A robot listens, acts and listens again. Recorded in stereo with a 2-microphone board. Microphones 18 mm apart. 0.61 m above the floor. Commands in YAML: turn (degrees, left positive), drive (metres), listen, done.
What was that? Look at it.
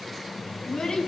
turn: 65
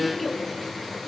done: "Found it: a child speaking, straight ahead."